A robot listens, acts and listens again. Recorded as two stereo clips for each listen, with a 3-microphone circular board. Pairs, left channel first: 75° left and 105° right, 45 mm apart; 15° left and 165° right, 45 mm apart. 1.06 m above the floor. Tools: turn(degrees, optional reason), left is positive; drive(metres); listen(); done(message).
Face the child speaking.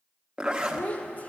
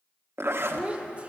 turn(degrees=130, reason="The child speaking: 130° left.")
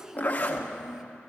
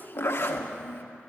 turn(degrees=-30, reason="The child speaking is now 30° right.")
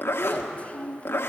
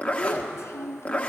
turn(degrees=15, reason="The child speaking is now 15° left.")
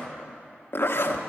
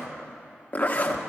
listen()
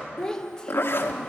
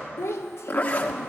done("Found it: a child speaking, straight ahead.")